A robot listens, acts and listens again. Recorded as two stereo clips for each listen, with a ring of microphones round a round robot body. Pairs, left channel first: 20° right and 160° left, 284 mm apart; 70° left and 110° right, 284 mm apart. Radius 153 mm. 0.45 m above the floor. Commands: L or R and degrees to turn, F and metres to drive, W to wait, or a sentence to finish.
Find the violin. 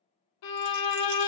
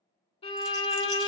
Found it: a violin, straight ahead.